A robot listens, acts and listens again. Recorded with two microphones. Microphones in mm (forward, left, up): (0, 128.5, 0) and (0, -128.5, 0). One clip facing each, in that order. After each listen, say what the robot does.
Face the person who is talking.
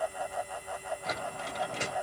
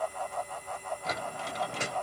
Keep listening.
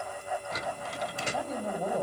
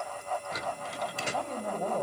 Turn 30° left.
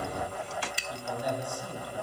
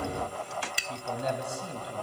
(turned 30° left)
Turn 25° right.
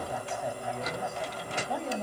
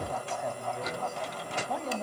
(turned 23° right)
Found it: a man speaking, straight ahead, 2 to 4 m away.